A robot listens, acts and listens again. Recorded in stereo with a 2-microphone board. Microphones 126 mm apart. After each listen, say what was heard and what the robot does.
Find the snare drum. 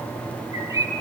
Keep listening.
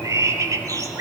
Keep listening.
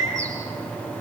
I can't make out a snare drum, only a bird.